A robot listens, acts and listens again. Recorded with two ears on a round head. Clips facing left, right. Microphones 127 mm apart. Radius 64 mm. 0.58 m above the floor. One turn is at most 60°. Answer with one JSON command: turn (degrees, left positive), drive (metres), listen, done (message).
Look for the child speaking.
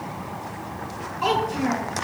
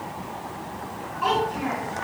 {"turn": 50}
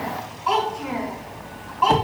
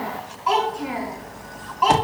{"done": "Found it: a child speaking, straight ahead, 2 to 4 m away."}